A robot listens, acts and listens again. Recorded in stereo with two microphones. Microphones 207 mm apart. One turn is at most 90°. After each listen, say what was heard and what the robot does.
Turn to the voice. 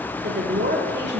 The woman speaking: about 55° right or 125° right. Turn 55° right.
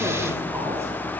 Keep listening.
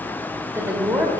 So it is at 15° right. Turn 15° right.
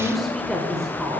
Facing the woman speaking, 1 to 2 m away.